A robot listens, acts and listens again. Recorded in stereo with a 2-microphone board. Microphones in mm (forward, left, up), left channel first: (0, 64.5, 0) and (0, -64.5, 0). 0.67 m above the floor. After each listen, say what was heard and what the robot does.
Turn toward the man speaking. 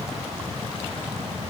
Keep listening.
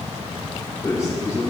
The man speaking: about 25° left or 155° left. Turn 25° left.
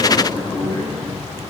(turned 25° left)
So it is at 130° left. Turn 130° left.
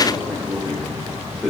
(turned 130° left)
Found it: a man speaking, straight ahead.